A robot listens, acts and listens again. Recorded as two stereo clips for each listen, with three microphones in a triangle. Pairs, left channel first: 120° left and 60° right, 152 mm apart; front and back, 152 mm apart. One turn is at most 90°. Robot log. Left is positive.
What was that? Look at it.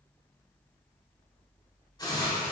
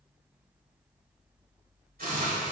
note: The hiss: straight behind.
cmd yaw +90
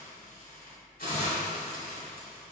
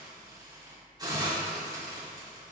note: The hiss is now 120° left.
cmd yaw +90
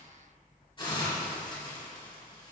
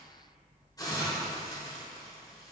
note: The hiss is now 65° left.
cmd yaw +65
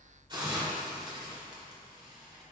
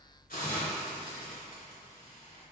end: Found it: a hiss, straight ahead.